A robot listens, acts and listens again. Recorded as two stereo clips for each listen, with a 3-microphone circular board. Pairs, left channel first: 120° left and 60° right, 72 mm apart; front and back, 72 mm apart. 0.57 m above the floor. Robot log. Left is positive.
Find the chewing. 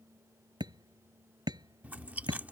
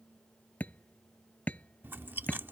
note: The chewing: 125° right.
cmd yaw -125
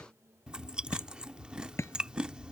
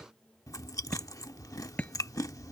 note: The chewing is now 15° left.
cmd yaw +15
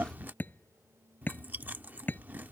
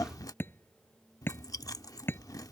end: Facing the chewing.